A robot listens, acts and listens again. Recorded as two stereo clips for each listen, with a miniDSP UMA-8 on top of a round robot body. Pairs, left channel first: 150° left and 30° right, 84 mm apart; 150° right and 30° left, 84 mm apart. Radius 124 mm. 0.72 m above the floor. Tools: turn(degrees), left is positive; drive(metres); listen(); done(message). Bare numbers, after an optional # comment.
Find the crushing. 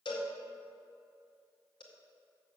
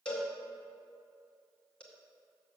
listen()
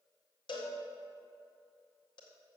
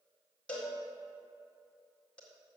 listen()
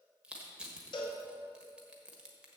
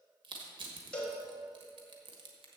# The crushing: 50° left.
turn(50)
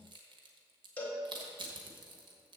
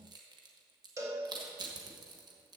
done("Found it: crushing, straight ahead.")